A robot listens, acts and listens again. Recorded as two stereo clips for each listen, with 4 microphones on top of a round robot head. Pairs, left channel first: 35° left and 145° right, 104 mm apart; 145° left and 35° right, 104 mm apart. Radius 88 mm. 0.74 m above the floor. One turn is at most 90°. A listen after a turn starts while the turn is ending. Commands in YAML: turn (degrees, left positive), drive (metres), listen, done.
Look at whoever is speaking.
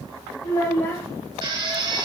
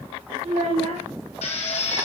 turn: -35
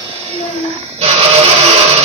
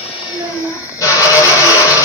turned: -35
done: "Found it: a child speaking, straight ahead."